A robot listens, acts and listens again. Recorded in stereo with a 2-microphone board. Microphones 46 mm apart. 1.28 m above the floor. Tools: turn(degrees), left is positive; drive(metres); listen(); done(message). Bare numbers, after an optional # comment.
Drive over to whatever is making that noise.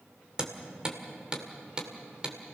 # The hammering: about 20° right or 160° right.
turn(-20)
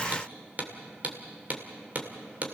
# So it is at 140° right.
turn(-140)
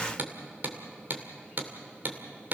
# The hammering is now 50° right.
turn(-50)
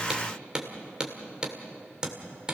# The hammering is now 20° right.
turn(-20)
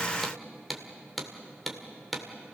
drive(1.0)
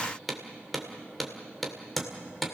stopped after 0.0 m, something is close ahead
done("Something is in my way. I am facing the hammering but have not reached it.")